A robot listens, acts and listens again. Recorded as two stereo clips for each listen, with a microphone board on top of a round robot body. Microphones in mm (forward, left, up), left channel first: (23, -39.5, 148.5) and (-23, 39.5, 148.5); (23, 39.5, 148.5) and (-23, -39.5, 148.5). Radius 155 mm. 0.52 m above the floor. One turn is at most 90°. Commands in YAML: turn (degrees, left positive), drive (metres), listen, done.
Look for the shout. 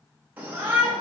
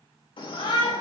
turn: 50
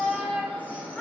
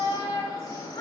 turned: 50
turn: 10
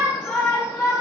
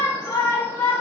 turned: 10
done: "Facing the shout, 2 to 4 m away."